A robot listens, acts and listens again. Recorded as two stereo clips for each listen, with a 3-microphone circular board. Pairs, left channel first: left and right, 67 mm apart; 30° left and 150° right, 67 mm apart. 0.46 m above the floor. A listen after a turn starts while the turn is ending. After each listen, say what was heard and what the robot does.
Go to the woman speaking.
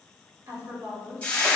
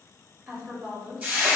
The woman speaking: 90° right. Turn 90° right.
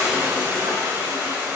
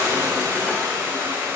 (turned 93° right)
Keep listening.
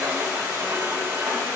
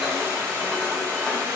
Keep listening.
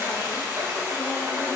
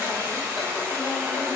I heard a woman speaking from this way, but can't make it out now. I did not reach it.